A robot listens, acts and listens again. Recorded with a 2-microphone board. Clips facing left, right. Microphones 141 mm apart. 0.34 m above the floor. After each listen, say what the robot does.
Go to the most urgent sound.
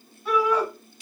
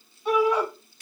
Turn 20° right.
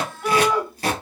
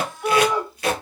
Drive 1.0 m forward.
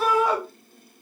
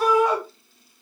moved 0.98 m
Drive 1.0 m forward.
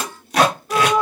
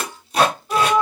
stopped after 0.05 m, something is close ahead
Arrived at the shout, straight ahead.